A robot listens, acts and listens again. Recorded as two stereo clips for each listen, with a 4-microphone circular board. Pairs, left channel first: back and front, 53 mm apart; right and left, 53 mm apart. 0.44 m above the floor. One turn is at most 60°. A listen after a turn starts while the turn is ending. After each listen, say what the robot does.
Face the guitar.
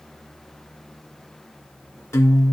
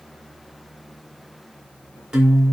Turn 60° left.
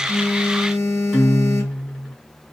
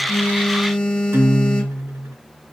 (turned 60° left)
Turn 60° left.
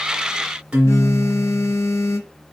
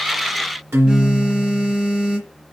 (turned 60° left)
Turn 60° left.
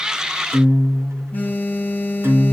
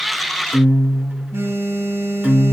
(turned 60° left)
Turn 30° left.
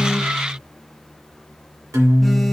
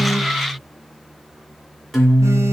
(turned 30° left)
Facing the guitar.